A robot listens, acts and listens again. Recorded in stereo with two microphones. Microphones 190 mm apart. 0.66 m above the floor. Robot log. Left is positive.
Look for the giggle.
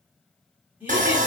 cmd yaw -30
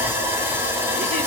cmd idle
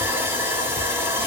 cmd idle
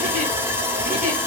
end: I heard a giggle, but can't make it out now. It was about 20° left or 140° right.